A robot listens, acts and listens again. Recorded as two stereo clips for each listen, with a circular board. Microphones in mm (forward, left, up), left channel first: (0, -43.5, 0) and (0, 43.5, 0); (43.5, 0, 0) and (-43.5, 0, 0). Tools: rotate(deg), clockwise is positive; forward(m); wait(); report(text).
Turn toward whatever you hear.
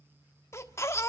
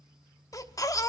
rotate(40)
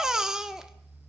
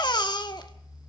report("Found it: a baby crying, straight ahead, 1 to 2 m away.")